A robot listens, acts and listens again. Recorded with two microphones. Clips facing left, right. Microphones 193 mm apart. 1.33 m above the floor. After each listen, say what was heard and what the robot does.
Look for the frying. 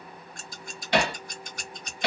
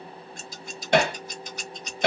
Keep listening.
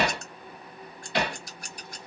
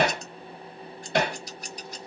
Keep listening.
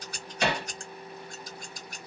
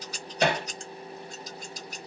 I can't make out frying, only scissors and hammering.